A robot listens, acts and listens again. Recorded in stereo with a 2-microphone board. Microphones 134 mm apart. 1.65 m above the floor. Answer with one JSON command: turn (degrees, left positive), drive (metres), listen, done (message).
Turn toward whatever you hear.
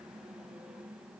{"listen": true}
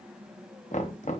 {"turn": 65}
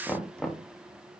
{"done": "Facing the knocking."}